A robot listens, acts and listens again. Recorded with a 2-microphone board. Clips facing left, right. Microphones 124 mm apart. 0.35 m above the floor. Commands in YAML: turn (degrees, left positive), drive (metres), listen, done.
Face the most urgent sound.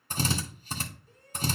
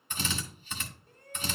turn: -60
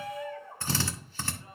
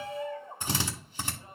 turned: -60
turn: -25
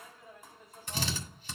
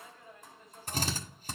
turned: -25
done: "Facing the shout."